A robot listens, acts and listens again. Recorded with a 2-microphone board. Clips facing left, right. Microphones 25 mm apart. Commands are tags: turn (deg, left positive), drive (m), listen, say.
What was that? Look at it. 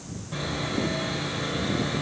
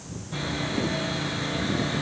<turn deg="20"/>
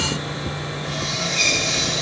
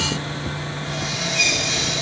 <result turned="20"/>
<turn deg="140"/>
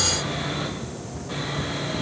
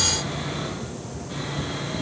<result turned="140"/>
<turn deg="40"/>
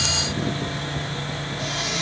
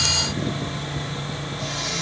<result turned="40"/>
<say>Facing the sawing, 2 to 4 m away.</say>